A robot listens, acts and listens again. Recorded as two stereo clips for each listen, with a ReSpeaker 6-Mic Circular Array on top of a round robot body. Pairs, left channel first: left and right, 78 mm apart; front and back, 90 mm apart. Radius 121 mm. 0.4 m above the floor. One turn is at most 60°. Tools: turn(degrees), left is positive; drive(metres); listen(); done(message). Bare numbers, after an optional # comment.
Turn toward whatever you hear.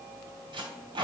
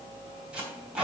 # The tape being pulled: 100° right.
turn(-60)
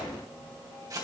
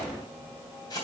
# The tape being pulled is now 50° right.
turn(-50)
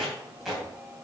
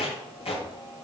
done("Found it: tape being pulled, straight ahead, 2 to 4 m away.")